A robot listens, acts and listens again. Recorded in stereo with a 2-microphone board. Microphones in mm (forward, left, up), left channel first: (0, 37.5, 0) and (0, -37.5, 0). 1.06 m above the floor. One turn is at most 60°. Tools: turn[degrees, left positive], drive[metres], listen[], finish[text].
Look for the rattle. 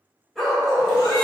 Action: listen[]
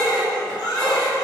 Action: listen[]
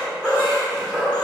Action: finish[I can't make out a rattle to turn to.]